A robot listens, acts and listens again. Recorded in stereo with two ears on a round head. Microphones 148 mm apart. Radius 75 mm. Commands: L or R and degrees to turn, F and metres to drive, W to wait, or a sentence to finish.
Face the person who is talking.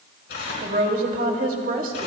R55
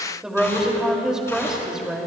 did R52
Facing the woman speaking, 2 to 4 m away.